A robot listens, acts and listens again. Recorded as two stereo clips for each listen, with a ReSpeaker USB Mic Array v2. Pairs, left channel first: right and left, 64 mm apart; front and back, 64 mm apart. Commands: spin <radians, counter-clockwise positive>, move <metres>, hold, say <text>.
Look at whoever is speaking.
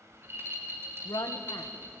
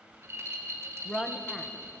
spin -1.48
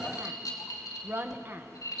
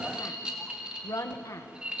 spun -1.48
spin 0.61
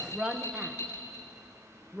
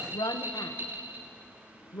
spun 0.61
spin 0.26
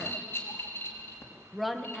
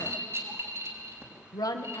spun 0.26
say Found it: a woman speaking, straight ahead.